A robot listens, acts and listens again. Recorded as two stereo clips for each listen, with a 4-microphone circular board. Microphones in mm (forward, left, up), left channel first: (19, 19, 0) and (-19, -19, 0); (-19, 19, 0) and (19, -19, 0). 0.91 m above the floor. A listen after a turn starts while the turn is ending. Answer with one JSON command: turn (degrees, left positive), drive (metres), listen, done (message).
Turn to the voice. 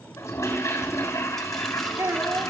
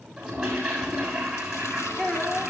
{"turn": -160}
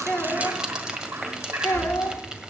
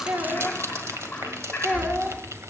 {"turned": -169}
{"turn": 10}
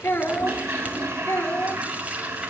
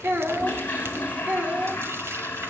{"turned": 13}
{"done": "Facing the child speaking, 2 to 4 m away."}